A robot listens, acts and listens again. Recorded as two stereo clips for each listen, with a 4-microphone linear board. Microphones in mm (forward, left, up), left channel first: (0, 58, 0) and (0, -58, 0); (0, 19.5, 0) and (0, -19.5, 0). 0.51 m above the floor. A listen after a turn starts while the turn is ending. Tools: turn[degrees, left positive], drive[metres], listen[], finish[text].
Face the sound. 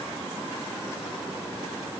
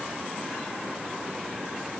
Action: listen[]
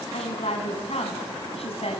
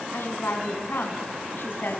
Thought: The woman speaking: about 60° left or 120° left.
Action: turn[60]
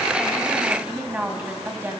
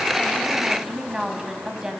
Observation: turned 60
Thought: So it is at 15° right.
Action: turn[-15]
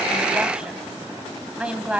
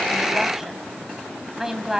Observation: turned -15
Thought: The woman speaking is now 10° right.
Action: turn[-10]
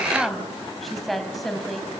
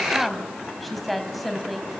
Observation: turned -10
Action: finish[Facing the woman speaking, 2 to 4 m away.]